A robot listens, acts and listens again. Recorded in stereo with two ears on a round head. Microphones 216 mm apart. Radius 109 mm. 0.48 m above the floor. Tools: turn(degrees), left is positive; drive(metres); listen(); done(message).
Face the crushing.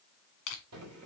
turn(degrees=60)
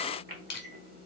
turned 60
turn(degrees=25)
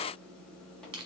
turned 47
turn(degrees=-25)
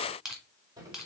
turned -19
done("Found it: crushing, straight ahead, 1 to 2 m away.")